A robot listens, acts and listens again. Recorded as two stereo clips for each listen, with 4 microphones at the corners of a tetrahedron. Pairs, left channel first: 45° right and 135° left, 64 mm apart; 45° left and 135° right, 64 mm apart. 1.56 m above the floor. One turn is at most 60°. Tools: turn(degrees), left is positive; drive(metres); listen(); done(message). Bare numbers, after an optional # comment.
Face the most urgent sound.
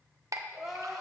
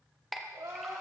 # The crying: 135° right.
turn(-60)
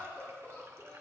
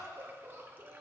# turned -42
# The crying is now 95° right.
turn(-60)
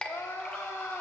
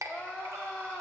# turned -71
# The crying is now 20° right.
turn(-20)
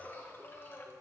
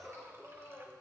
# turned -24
done("Facing the crying.")